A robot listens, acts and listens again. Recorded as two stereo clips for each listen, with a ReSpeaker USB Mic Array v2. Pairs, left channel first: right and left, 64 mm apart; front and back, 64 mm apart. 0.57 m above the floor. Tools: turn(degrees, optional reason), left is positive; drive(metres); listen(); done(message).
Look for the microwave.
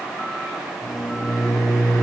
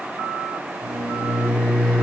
turn(degrees=-120, reason="The microwave: 120° right.")
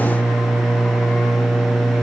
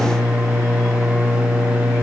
done("Found it: a microwave, straight ahead, 2 to 4 m away.")